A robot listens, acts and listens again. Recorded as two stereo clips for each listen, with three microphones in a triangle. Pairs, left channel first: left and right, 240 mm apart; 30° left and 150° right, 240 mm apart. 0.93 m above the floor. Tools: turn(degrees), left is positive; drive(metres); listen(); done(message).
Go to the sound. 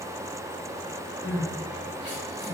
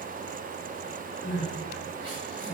turn(degrees=50)
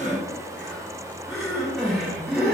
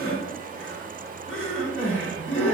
drive(metres=1.0)
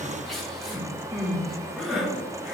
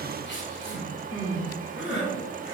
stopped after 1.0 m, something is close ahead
done("Arrived at the crying, straight ahead.")